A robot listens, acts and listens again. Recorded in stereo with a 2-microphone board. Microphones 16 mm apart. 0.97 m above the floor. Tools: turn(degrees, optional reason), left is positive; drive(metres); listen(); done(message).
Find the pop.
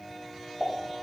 turn(degrees=-40, reason="The pop: about 40° right or 140° right.")
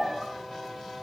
done("Facing the pop, 2 to 4 m away.")